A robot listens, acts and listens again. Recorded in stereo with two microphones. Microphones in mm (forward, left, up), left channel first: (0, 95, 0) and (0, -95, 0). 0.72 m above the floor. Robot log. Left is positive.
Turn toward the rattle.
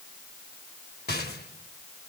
note: The rattle: about 55° left or 125° left.
cmd yaw +55
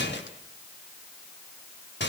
note: So it is at 65° left.
cmd yaw +65
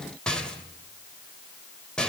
end: Facing the rattle, 2 to 4 m away.